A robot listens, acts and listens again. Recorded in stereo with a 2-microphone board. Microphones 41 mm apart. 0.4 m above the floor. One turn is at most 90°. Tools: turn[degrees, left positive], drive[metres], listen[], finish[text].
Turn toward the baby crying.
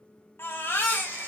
Thought: The baby crying: about 70° left or 110° left.
Action: turn[70]
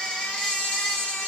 Thought: So it is at 20° left.
Action: turn[20]
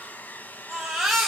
Action: finish[Facing the baby crying.]